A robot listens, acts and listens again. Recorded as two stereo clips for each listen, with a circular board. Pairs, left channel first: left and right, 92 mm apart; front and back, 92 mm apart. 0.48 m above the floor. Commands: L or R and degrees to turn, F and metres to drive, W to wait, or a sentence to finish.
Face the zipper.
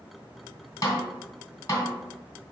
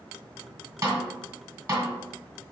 W
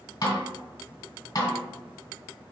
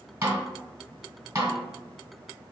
W
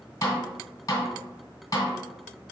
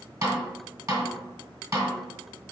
I can't make out a zipper, only a snare drum.